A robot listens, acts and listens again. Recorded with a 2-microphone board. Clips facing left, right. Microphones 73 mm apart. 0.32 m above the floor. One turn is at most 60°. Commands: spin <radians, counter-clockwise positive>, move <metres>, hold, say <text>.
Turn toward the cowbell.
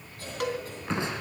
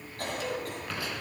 spin 1.05
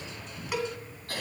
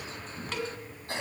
spin 0.26
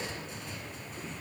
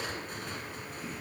hold
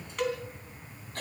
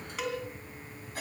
say Found it: a cowbell, straight ahead.